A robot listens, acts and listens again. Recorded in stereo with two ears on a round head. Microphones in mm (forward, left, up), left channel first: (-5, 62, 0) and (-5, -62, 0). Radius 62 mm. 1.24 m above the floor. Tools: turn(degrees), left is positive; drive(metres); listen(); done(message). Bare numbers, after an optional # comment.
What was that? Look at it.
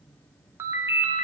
# The ringtone: about 20° right or 160° right.
turn(-20)
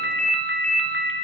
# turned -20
done("Found it: a ringtone, straight ahead.")